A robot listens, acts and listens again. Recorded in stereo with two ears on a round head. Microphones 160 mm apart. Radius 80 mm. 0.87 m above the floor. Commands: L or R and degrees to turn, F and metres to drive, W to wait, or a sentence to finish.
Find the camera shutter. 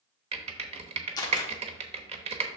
L20
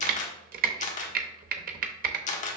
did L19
L140
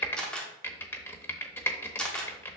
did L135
Facing the camera shutter.